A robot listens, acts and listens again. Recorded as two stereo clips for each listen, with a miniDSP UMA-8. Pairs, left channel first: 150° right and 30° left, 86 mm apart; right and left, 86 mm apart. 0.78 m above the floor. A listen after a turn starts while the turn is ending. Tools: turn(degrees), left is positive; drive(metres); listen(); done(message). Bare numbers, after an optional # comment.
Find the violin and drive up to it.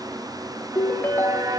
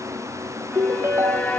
# The violin: 15° right.
turn(-15)
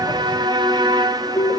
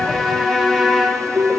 drive(1.0)
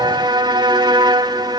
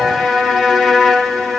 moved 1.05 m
drive(1.0)
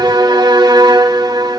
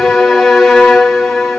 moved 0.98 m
drive(1.0)
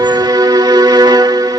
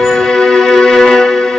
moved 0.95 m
drive(1.0)
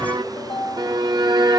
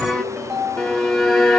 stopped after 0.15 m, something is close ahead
# The violin is now 10° right.
turn(-10)
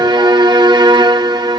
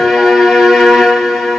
done("I am next to the violin.")